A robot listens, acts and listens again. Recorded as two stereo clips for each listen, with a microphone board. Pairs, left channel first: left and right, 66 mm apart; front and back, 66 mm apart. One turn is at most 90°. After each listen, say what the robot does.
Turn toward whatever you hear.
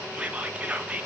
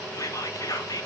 Turn 20° right.
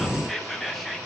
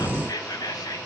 Found it: whispering, straight ahead, 1 to 2 m away.